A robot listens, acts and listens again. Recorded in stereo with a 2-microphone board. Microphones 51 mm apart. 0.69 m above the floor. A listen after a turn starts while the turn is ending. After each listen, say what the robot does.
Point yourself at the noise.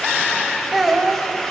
Turn 30° right.
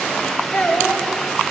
Turn 25° left.
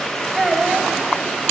Facing the child speaking.